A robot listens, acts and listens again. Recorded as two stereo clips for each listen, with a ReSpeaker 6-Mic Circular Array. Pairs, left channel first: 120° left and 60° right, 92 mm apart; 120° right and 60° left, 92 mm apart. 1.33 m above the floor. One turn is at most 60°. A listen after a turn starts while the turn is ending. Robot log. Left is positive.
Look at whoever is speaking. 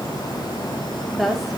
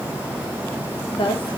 note: The woman speaking: 150° right.
cmd yaw -60
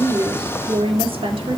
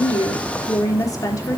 note: The woman speaking is now 70° right.
cmd yaw -60
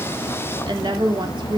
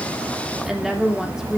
note: The woman speaking is now 25° right.
cmd yaw -25
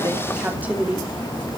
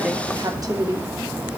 note: The woman speaking is now 10° left.
cmd yaw +10
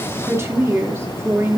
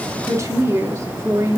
end: Facing the woman speaking, 2 to 4 m away.